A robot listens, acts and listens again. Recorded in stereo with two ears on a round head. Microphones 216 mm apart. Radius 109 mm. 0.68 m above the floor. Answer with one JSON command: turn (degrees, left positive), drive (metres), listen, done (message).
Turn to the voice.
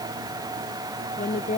{"turn": 30}
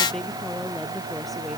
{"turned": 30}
{"listen": true}
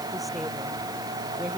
{"listen": true}
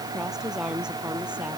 {"done": "Facing the woman speaking."}